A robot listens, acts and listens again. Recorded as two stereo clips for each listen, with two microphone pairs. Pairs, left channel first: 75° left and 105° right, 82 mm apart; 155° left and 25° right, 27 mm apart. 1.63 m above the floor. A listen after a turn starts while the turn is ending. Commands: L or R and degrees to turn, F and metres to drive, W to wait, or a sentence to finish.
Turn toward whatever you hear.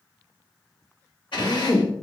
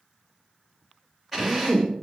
L70
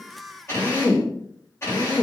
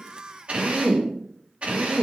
L20
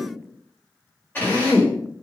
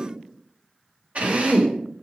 L10
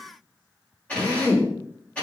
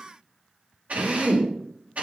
Facing the drill.